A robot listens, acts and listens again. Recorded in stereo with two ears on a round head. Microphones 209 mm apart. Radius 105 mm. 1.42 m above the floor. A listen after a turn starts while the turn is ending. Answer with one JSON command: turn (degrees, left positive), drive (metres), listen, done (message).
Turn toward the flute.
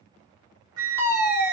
{"turn": -70}
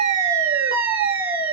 {"turn": -40}
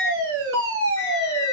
{"turn": 15}
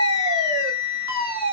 {"done": "Facing the flute."}